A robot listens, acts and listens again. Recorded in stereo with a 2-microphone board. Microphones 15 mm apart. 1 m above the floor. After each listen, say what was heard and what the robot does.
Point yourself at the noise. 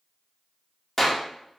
Turn 30° left.
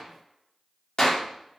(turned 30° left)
So it is at 140° left. Turn 140° left.
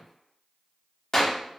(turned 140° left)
The clap is now 30° left. Turn 30° left.
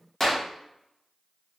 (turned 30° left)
The clap is now 15° left. Turn 15° left.
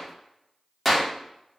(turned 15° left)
Facing the clap.